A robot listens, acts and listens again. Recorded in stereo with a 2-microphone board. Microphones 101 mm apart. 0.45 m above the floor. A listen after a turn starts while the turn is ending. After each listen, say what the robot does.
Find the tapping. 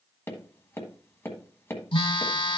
Turn 25° left.
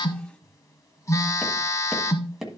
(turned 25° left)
Found it: tapping, straight ahead.